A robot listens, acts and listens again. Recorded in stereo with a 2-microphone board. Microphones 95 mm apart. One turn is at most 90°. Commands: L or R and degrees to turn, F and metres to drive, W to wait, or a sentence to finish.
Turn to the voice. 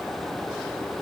W
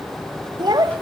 R45
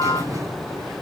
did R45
W
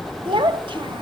R75
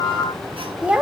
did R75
R15
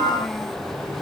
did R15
W
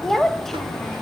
Facing the child speaking, under 1 m away.